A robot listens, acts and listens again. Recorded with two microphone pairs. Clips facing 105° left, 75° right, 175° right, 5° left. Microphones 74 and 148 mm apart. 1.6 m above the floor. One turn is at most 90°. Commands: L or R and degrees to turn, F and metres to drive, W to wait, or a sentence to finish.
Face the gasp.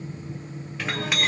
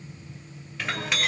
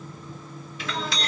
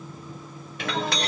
W
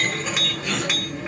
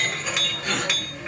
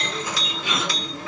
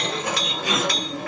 R40
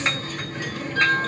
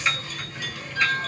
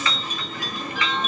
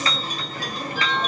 I heard a gasp from this way, but can't make it out now.